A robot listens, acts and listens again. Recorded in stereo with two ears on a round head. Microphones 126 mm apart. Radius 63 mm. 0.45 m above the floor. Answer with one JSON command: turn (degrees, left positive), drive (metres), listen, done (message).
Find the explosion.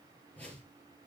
{"listen": true}
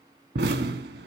{"turn": -90}
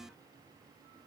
{"done": "I heard an explosion from this way, but can't make it out now."}